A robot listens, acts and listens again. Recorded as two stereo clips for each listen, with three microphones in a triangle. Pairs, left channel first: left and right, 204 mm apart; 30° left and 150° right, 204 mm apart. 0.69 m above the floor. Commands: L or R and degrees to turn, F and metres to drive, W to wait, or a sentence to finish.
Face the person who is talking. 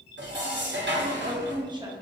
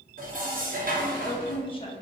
R30
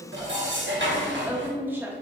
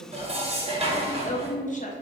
R10
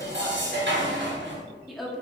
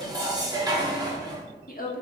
Facing the woman speaking.